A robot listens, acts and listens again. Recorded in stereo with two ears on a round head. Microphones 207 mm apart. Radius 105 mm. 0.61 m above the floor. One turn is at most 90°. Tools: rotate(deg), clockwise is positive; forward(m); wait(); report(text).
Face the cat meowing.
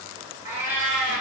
rotate(30)
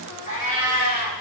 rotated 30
rotate(-40)
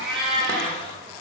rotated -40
report("Facing the cat meowing.")